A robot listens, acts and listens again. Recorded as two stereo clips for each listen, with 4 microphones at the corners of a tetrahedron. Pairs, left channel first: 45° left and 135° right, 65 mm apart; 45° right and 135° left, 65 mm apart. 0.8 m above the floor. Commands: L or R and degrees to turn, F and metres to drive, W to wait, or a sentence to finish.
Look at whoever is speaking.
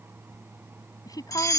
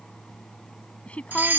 L25
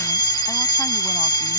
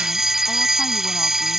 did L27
W
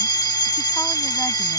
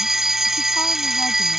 W
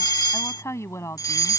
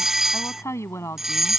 Facing the woman speaking.